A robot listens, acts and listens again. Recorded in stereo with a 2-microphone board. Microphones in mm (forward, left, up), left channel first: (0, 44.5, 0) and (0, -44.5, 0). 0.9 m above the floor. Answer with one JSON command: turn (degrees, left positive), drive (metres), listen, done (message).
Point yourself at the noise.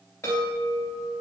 {"turn": 25}
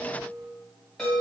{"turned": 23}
{"done": "Found it: a chime, straight ahead."}